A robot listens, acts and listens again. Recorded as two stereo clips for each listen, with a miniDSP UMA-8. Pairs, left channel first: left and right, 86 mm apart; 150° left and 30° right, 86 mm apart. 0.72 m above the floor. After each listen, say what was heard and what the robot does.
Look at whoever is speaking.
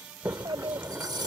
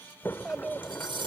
The child speaking: 110° right. Turn 110° right.
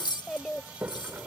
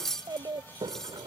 The child speaking is now 10° left. Turn 10° left.
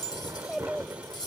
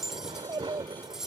Facing the child speaking.